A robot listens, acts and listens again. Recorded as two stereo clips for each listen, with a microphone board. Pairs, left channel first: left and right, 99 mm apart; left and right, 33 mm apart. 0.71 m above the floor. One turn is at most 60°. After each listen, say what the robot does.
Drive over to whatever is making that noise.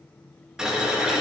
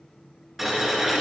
Turn 30° right.
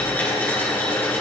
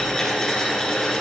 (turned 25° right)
Turn 20° left.
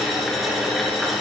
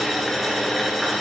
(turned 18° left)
Drive 1.0 m forward.
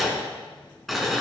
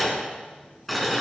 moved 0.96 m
Drive 1.0 m forward.
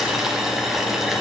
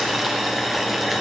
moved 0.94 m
Drive 1.0 m forward.
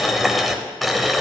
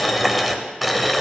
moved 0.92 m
Drive 1.0 m forward.
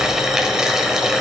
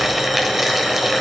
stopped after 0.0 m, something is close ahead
Arrived at the boiling, straight ahead.